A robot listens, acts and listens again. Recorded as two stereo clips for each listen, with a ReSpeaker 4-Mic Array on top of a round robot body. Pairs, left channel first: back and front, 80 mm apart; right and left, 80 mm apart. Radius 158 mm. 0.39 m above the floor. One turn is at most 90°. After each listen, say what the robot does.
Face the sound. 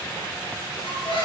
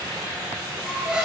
Turn 90° left.
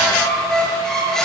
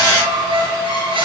Turn 90° left.
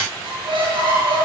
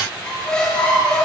Turn 10° right.
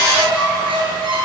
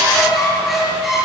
Facing the squeak.